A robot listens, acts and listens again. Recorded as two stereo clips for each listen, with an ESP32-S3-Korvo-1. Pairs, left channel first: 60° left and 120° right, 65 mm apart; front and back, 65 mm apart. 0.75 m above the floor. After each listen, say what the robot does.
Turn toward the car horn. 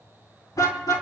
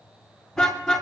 Turn 85° left.
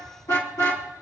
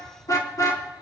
Turn 25° left.
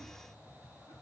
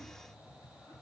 Keep listening.
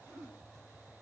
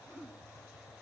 Keep listening.
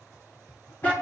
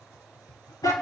Found it: a car horn, straight ahead, over 4 m away.